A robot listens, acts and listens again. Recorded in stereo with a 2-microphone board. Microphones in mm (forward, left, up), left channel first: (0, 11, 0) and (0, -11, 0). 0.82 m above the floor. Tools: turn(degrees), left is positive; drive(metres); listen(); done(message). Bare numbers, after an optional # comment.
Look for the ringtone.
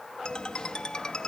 # The ringtone: about 35° left or 145° left.
turn(35)
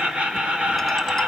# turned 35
listen()
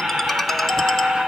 # So it is at 10° left.
turn(10)
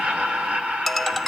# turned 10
done("Found it: a ringtone, straight ahead.")